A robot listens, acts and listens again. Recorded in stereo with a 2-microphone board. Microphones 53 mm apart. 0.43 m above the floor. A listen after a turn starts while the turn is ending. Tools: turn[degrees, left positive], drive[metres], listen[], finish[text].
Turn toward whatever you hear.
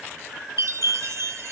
Thought: The chime: about 75° right or 105° right.
Action: turn[-75]
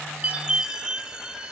Thought: So it is at 20° right.
Action: turn[-20]
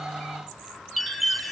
Action: finish[Found it: a chime, straight ahead.]